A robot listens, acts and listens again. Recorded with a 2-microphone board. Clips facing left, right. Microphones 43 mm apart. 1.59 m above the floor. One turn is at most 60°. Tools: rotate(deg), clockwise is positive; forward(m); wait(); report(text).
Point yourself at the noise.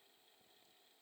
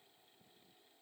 wait()
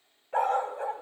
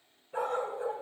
rotate(-60)
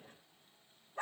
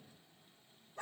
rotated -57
rotate(-25)
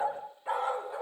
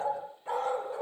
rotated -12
rotate(-10)
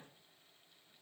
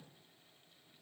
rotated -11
wait()
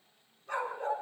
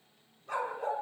report("Found it: a dog barking, straight ahead.")